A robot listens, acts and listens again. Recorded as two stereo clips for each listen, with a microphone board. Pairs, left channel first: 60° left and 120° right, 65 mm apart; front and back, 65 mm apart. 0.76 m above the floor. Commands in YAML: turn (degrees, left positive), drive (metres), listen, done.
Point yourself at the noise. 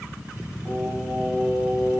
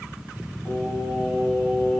turn: -55
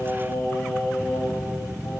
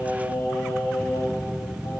turn: 25
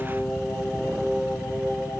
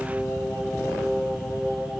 turn: 20
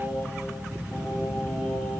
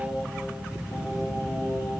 done: "Found it: singing, straight ahead."